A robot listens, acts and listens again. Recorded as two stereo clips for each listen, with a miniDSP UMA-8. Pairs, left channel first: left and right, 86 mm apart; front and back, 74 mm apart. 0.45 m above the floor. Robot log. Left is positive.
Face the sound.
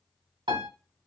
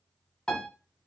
note: The piano: 80° right.
cmd yaw -80
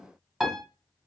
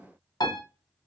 note: The piano is now 10° right.
cmd yaw -10
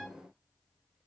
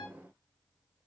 cmd idle
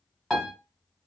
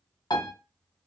end: Found it: a piano, straight ahead.